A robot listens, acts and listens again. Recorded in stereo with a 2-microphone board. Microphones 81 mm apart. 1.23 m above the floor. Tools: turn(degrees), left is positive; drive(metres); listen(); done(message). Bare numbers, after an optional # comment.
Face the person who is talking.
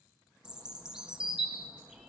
listen()
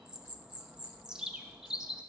listen()
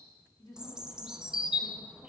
# The woman speaking: about 55° left or 125° left.
turn(55)
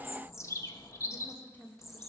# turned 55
# So it is at 20° left.
turn(20)
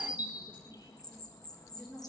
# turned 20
done("Found it: a woman speaking, straight ahead.")